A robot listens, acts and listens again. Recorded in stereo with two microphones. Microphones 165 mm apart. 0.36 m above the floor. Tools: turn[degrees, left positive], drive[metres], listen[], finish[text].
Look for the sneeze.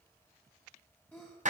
Action: turn[30]
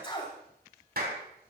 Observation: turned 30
Thought: So it is at 140° left.
Action: turn[140]
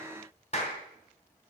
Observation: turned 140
Action: finish[I heard a sneeze from this way, but can't make it out now.]